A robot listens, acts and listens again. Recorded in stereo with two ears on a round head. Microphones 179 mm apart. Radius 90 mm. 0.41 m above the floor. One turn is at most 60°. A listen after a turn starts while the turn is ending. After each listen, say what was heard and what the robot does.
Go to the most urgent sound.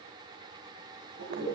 Keep listening.
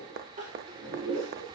The crying: about 40° right or 140° right. Turn 40° right.
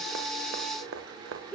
Drive 1.0 m forward.
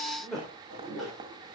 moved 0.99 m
Drive 1.0 m forward.
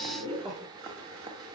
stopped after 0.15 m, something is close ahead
Blocked. The crying is further on, straight ahead.